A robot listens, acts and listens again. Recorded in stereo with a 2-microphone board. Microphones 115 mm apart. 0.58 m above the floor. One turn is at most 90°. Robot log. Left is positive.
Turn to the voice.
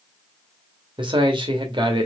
note: The man speaking: about 45° right or 135° right.
cmd yaw -45
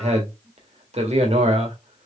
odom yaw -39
note: So it is at 90° right.
cmd yaw -90
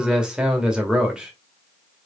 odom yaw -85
end: Facing the man speaking, 1 to 2 m away.